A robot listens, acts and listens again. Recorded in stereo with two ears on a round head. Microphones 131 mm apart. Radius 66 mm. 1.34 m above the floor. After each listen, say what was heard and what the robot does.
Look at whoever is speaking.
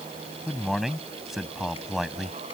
Turn 30° left.
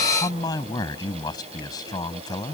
So it is at 150° left. Turn 150° left.
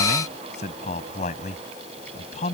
The man speaking is now 45° left. Turn 45° left.
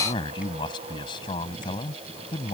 The man speaking is now 30° left. Turn 30° left.
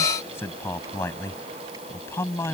The man speaking is now 15° left. Turn 15° left.
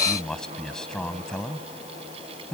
Found it: a man speaking, straight ahead.